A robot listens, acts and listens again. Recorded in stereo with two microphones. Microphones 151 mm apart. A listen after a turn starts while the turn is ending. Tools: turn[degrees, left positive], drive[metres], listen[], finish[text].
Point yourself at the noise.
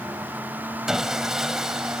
Action: turn[-30]
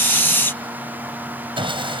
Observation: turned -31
Thought: So it is at 145° right.
Action: turn[-145]
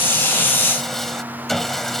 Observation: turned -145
Action: finish[Found it: sawing, straight ahead.]